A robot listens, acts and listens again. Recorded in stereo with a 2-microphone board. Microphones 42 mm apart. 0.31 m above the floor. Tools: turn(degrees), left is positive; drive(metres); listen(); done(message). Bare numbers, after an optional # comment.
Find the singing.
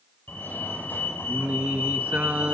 # The singing: about 35° right or 145° right.
turn(-35)
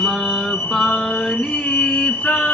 # So it is at 30° left.
turn(30)
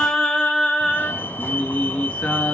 # The singing is now 30° left.
turn(30)
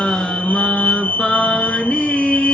# The singing is now 15° left.
turn(15)
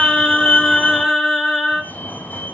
done("Found it: singing, straight ahead, 2 to 4 m away.")